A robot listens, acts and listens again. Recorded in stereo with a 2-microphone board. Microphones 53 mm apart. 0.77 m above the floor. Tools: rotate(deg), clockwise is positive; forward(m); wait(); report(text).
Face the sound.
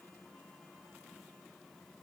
wait()
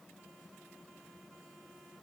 wait()
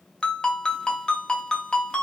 rotate(-15)
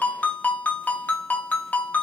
rotate(-145)
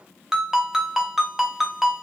rotate(10)
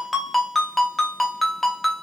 report("Facing the ringtone, under 1 m away.")